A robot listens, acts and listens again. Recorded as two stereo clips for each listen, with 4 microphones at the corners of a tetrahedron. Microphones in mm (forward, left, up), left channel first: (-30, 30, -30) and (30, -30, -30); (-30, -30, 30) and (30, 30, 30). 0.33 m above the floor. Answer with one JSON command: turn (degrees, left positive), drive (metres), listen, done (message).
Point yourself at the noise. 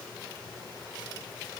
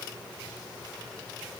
{"listen": true}
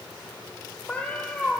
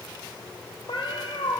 {"turn": -145}
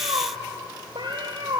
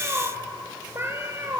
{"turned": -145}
{"turn": -15}
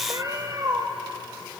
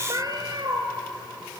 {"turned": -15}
{"done": "Found it: a cat meowing, straight ahead, 2 to 4 m away."}